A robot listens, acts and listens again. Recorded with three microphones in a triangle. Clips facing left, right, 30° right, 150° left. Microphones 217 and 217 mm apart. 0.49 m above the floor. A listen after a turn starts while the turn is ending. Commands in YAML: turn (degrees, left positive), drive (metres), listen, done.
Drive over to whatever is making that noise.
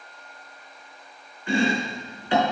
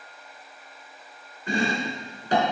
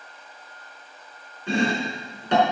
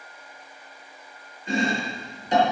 turn: -40
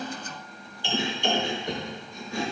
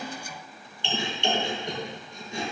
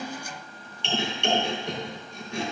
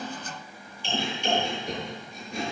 turn: -25
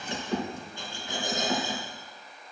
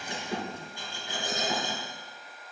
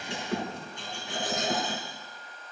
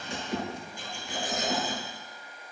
turn: -15
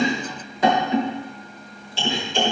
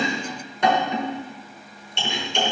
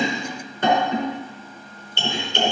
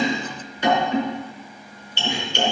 drive: 1.0
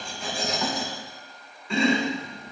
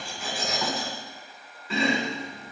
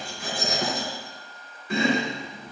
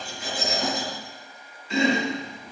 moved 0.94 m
drive: 1.0
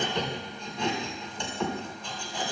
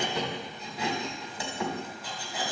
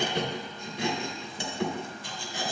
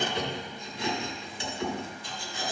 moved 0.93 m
drive: 1.0
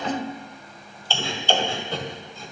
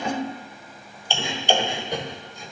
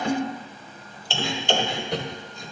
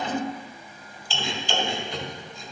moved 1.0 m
turn: -15
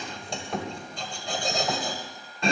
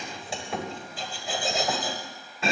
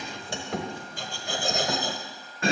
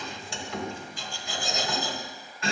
drive: 1.0
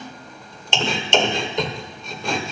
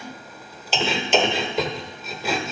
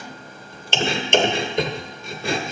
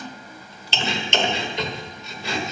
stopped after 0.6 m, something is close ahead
done: "Arrived at the chopping, straight ahead."